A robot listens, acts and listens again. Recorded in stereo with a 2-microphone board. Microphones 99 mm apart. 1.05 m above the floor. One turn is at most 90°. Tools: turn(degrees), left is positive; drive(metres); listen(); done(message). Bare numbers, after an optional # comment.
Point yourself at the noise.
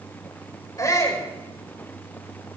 # The shout: about 35° left or 145° left.
turn(35)
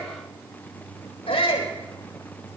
# So it is at 110° left.
turn(90)
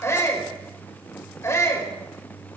# The shout is now 30° left.
turn(30)
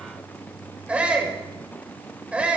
# The shout is now 15° right.
turn(-15)
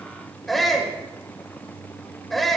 done("Found it: a shout, straight ahead, over 4 m away.")